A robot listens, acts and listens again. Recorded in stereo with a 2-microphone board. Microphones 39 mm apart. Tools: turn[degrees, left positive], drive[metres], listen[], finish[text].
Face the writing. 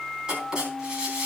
Thought: The writing: about 25° right or 155° right.
Action: turn[-25]
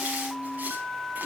Action: listen[]
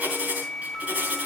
Thought: So it is at 135° right.
Action: turn[-135]
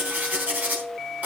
Thought: The writing is now 45° right.
Action: turn[-45]
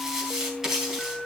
Thought: The writing is now 10° right.
Action: turn[-10]
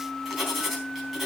Action: finish[Found it: writing, straight ahead.]